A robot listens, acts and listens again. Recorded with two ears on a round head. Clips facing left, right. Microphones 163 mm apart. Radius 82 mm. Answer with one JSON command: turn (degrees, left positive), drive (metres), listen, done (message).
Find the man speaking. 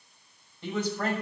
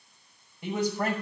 {"turn": -30}
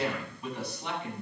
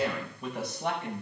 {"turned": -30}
{"turn": -135}
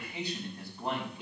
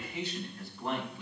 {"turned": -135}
{"turn": 15}
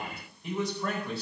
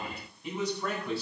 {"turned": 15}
{"done": "Facing the man speaking."}